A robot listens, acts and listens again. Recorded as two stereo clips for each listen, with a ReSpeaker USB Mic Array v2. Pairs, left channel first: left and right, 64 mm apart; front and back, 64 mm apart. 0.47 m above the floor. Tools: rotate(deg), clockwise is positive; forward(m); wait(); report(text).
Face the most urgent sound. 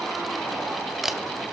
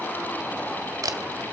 wait()
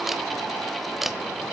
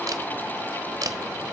wait()
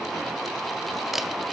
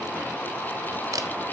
report("I can't make out anything urgent, only a camera shutter.")